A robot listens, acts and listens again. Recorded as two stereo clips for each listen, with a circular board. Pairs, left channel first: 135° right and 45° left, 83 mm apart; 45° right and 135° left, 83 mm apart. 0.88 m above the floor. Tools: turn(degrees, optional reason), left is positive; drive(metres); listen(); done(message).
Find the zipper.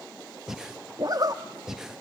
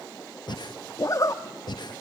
done("Found it: a zipper, straight ahead.")